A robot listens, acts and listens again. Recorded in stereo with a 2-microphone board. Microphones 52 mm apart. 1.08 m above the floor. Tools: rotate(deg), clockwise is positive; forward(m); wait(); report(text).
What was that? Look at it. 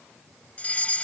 rotate(-25)
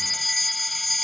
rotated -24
report("Found it: a fire alarm, straight ahead.")